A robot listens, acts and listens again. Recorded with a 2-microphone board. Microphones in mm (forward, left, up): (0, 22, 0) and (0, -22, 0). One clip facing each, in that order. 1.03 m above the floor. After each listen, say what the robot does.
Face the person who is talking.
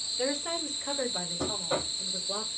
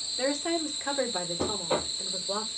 Turn 65° right.
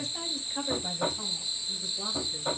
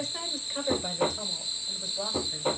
Turn 55° right.
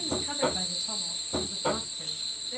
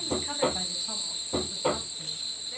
Found it: a woman speaking, straight ahead.